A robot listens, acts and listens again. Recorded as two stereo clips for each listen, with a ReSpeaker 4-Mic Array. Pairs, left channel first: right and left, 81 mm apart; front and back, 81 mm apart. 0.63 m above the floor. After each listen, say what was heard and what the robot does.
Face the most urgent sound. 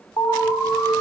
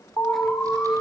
The alarm: 55° right. Turn 55° right.
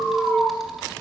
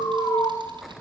The alarm is now 10° right. Turn 10° right.
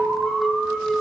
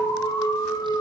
Facing the alarm, 2 to 4 m away.